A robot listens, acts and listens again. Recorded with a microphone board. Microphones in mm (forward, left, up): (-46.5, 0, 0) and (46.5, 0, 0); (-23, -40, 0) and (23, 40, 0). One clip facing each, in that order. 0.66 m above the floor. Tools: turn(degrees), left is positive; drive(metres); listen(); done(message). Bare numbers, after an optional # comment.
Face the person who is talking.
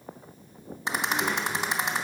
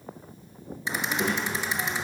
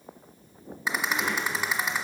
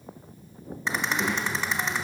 # The child speaking: 25° right.
turn(-25)
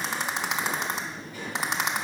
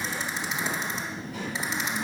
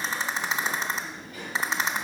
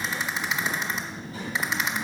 done("Facing the child speaking.")